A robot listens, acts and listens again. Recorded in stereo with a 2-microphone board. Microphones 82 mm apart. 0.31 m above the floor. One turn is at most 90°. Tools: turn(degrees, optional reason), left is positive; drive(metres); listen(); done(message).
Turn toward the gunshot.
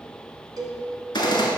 turn(degrees=70, reason="The gunshot: about 70° left or 110° left.")
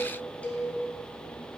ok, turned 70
listen()
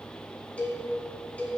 done("I heard a gunshot, but can't make it out now. It was about straight ahead or 40° left.")